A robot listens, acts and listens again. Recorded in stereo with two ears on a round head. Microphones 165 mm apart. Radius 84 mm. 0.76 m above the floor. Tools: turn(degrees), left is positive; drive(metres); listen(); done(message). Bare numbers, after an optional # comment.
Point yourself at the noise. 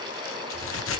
turn(90)
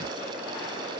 done("Facing where the crack came from. I can't hear it now.")